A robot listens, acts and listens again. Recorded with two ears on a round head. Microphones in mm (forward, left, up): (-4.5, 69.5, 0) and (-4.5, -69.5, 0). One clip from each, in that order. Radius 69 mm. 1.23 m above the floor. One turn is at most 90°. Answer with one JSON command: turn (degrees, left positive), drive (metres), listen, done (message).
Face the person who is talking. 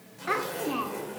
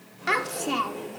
{"turn": -90}
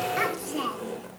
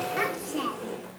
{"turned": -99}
{"turn": 10}
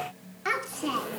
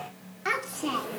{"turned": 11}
{"done": "Facing the child speaking."}